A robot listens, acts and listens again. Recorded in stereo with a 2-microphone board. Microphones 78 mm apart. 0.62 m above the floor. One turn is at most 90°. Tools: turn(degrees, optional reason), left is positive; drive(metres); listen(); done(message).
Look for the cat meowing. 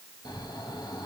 listen()
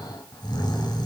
listen()
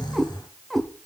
turn(degrees=30)
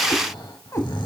turn(degrees=90, reason="So it is at 140° left.")
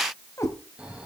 turn(degrees=40, reason="The cat meowing is now 40° left.")
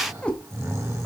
turn(degrees=15, reason="The cat meowing is now 15° left.")
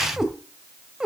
turn(degrees=-10, reason="The cat meowing is now 10° right.")
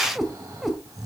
done("Facing the cat meowing, 1 to 2 m away.")